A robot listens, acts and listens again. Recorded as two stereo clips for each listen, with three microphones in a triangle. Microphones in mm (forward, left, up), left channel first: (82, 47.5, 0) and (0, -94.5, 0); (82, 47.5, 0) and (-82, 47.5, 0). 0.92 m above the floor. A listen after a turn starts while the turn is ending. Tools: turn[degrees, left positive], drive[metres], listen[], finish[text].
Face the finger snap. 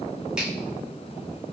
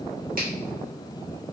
Action: listen[]
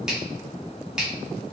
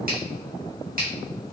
Thought: The finger snap: 155° left.
Action: turn[155]
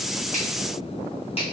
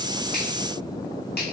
Action: finish[Found it: a finger snap, straight ahead, 1 to 2 m away.]